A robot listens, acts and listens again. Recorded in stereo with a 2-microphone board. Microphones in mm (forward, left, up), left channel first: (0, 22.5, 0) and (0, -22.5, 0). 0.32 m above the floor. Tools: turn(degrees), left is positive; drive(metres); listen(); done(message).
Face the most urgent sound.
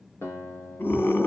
turn(degrees=55)
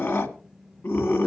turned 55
turn(degrees=65)
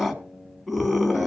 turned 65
done("Found it: a scream, straight ahead.")